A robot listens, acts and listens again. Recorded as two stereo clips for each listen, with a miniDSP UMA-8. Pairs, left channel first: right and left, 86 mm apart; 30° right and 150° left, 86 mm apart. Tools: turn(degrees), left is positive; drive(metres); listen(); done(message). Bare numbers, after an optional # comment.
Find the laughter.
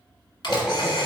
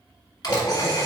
done("Found it: laughter, straight ahead.")